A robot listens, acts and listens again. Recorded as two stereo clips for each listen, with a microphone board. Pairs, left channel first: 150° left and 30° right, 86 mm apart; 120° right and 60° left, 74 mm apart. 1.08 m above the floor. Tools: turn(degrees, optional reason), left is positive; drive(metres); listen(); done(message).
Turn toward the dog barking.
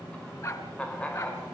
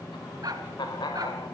turn(degrees=100, reason="The dog barking: 100° left.")
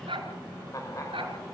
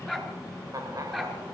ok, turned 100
turn(degrees=-25, reason="The dog barking is now 25° right.")
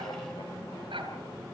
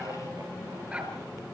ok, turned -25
turn(degrees=-10, reason="The dog barking is now 10° right.")
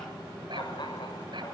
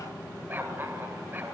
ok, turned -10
done("Facing the dog barking, over 4 m away.")